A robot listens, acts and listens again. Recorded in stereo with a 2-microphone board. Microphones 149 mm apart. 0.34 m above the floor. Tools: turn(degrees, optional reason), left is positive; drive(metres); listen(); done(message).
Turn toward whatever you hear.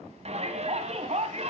turn(degrees=-45, reason="The shout: about 45° right or 135° right.")
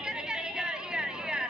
done("Facing the shout.")